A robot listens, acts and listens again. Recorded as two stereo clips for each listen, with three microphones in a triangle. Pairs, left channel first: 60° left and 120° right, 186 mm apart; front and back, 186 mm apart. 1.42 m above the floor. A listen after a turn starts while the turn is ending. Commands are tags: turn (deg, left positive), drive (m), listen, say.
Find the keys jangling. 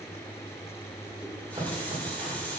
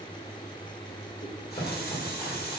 <listen/>
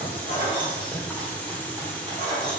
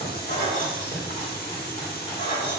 <turn deg="10"/>
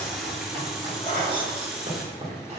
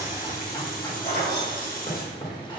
<say>Found it: keys jangling, straight ahead.</say>